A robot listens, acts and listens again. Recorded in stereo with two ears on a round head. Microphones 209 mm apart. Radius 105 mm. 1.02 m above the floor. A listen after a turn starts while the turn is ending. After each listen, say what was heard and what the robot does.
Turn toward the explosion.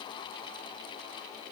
Keep listening.
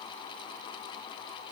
Keep listening.
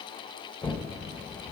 Turn 30° left.
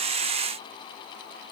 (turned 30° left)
Keep listening.
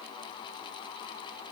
I heard an explosion, but can't make it out now. It was about 20° right or 140° left.